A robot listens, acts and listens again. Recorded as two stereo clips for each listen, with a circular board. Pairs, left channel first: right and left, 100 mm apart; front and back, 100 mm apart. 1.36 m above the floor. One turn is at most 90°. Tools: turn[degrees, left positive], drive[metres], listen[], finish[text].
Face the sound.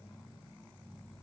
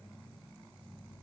Action: listen[]
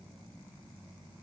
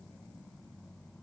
Action: listen[]
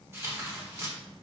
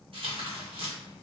Thought: The tearing paper: 155° left.
Action: turn[90]
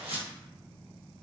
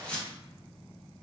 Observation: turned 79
Thought: The tearing paper is now 75° left.
Action: turn[75]
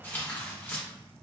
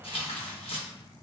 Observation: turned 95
Thought: The tearing paper is now 20° right.
Action: turn[-20]
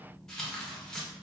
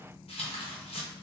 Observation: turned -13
Action: finish[Found it: tearing paper, straight ahead, under 1 m away.]